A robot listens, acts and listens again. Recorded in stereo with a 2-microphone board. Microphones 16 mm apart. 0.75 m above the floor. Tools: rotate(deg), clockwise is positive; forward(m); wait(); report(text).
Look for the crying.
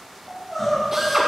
rotate(-30)
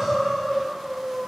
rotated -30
rotate(15)
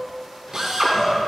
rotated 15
rotate(10)
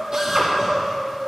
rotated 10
report("Found it: crying, straight ahead.")